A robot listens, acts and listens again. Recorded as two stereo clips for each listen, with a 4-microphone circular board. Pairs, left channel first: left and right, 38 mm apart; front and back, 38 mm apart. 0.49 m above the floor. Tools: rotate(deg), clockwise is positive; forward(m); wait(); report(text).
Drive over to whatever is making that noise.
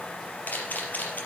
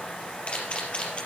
rotate(-55)
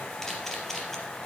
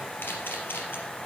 rotate(-15)
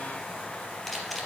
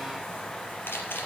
forward(1.0)
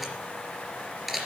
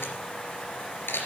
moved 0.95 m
forward(1.0)
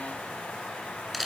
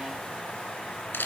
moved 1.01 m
forward(1.0)
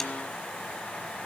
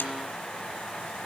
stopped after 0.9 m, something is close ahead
wait()
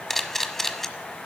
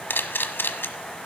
rotate(-10)
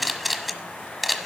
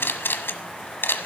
report("I am next to the camera shutter.")